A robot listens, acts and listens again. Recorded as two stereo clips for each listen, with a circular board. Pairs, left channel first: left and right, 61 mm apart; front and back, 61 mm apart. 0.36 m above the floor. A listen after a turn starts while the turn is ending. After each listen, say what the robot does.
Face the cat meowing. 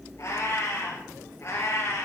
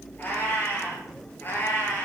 Turn 50° left.
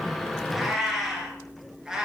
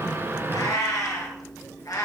Turn 10° right.
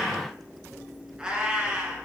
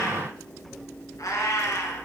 Turn 20° right.
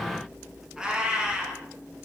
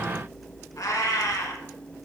Turn 15° right.
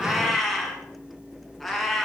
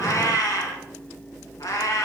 Found it: a cat meowing, straight ahead, 2 to 4 m away.